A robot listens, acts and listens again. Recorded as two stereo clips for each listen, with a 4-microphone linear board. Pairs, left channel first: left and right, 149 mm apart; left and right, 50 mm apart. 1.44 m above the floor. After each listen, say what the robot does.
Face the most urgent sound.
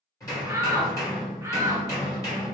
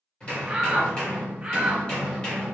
Turn 20° right.
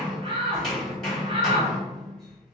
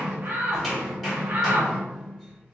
Turn 140° right.
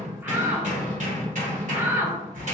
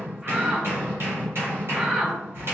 Turn 15° right.
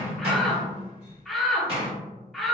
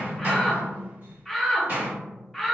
Found it: a shout, straight ahead, under 1 m away.